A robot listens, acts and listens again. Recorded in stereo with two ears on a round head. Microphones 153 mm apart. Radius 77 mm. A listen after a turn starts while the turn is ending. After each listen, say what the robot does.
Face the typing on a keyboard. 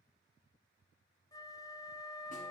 Keep listening.
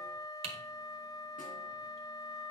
Turn 35° right.
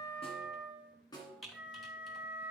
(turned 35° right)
Found it: typing on a keyboard, straight ahead.